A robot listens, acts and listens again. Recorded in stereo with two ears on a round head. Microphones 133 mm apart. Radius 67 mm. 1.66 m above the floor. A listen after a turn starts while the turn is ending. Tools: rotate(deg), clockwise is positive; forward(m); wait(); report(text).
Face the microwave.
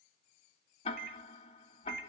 rotate(70)
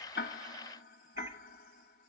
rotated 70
wait()
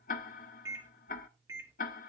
rotate(20)
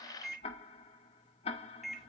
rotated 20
report("Facing the microwave, 1 to 2 m away.")